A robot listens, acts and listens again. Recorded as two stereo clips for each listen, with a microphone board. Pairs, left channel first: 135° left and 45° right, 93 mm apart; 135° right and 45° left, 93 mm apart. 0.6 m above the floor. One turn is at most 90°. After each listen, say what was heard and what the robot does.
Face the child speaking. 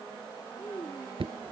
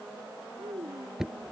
The child speaking: 65° left. Turn 65° left.
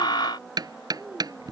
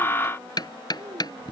The child speaking is now 20° left. Turn 20° left.
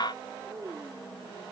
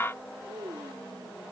Facing the child speaking.